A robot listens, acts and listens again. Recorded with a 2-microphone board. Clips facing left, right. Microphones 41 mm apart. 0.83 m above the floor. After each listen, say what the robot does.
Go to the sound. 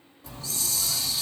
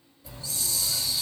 Turn 70° left.
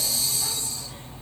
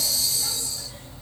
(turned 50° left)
Turn 35° left.
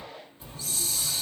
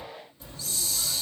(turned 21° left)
Turn 20° left.
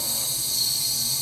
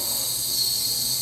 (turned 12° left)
Drive 1.0 m forward.
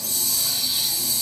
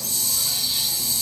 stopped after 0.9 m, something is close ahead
I am next to the hiss.